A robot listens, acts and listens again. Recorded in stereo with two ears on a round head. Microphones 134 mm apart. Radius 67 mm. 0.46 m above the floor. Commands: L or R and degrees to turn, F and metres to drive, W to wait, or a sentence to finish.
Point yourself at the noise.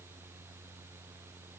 W
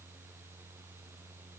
W
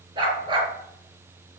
R35
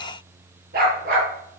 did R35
R110
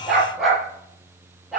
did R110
Facing the dog barking.